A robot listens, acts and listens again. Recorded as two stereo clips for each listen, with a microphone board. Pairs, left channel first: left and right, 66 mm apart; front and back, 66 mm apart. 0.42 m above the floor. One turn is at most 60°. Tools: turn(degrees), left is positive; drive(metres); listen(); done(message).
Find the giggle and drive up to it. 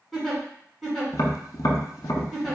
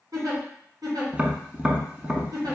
turn(degrees=60)
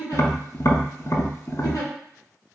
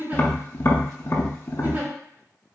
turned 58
turn(degrees=60)
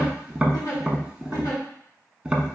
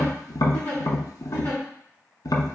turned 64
turn(degrees=60)
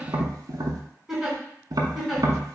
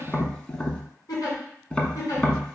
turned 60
drive(metres=1.0)
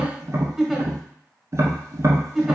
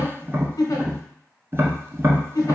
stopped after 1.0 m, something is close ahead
done("Arrived at the giggle, straight ahead.")